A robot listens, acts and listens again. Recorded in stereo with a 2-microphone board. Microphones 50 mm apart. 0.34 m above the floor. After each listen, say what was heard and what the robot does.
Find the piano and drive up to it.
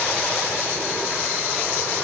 Keep listening.
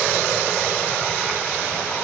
Keep listening.
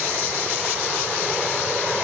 I can't make out a piano to turn to.